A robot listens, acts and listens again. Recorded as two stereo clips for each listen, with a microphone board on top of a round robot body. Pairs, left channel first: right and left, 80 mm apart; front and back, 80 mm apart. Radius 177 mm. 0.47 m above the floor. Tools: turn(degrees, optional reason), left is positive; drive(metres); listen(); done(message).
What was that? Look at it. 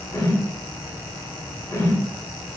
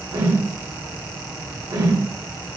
turn(degrees=-145, reason="The whoosh: 145° right.")
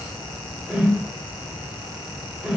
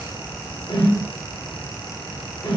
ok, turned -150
done("Facing the whoosh, 1 to 2 m away.")